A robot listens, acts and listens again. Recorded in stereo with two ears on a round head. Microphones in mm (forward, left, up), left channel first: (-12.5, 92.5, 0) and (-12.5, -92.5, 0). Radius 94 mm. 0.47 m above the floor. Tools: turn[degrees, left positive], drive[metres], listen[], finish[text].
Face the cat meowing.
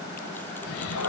Action: turn[90]
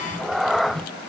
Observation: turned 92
Action: finish[Found it: a cat meowing, straight ahead.]